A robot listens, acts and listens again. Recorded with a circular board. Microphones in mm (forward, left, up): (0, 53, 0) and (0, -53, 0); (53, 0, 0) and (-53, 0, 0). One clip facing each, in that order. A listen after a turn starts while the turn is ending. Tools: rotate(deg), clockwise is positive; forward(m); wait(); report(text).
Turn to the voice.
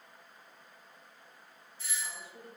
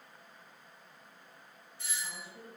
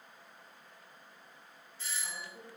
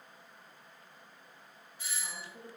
rotate(-125)
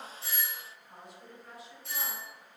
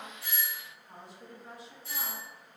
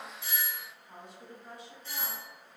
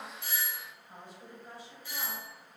rotate(30)
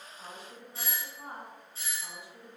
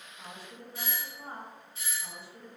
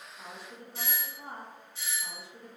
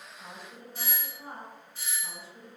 rotate(-15)
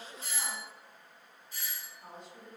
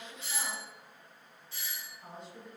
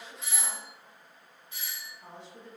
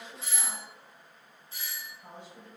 report("Facing the woman speaking, 1 to 2 m away.")